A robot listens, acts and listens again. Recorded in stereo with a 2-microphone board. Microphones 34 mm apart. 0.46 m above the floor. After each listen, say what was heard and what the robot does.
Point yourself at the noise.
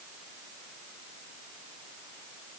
Keep listening.
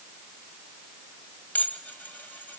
The dishes clattering: about 60° left or 120° left. Turn 60° left.
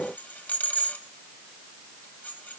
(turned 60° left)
So it is at 55° left. Turn 55° left.
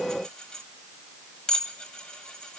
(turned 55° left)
The dishes clattering is now 20° left. Turn 20° left.
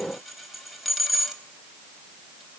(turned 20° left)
Facing the dishes clattering, 1 to 2 m away.